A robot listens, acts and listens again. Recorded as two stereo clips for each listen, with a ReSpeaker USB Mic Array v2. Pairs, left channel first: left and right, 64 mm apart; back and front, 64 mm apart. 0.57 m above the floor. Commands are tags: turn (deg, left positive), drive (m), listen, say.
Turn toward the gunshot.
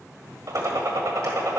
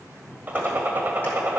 <turn deg="-60"/>
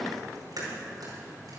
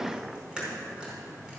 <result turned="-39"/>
<turn deg="-20"/>
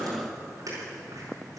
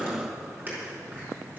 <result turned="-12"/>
<turn deg="-10"/>
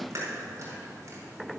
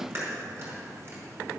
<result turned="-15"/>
<say>I heard a gunshot from this way, but can't make it out now.</say>